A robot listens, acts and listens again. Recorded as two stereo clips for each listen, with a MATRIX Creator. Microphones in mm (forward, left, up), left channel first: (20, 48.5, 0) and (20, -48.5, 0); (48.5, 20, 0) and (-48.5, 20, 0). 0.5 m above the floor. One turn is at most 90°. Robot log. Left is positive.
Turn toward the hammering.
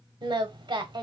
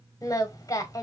cmd idle
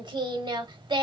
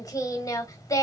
cmd idle
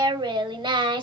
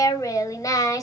end: I can't make out hammering, only singing.